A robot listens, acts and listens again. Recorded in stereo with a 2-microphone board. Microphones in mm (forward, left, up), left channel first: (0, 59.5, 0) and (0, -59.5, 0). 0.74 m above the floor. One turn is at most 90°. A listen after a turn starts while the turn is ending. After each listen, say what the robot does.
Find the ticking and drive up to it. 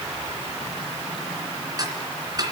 Turn 35° right.
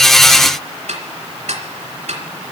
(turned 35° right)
Turn 90° right.
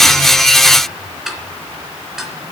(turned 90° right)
Drive 1.0 m forward.
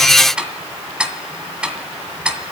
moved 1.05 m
Turn 10° right.
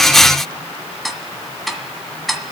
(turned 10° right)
Drive 1.0 m forward.
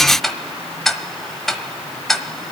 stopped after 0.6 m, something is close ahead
Arrived at the ticking, straight ahead.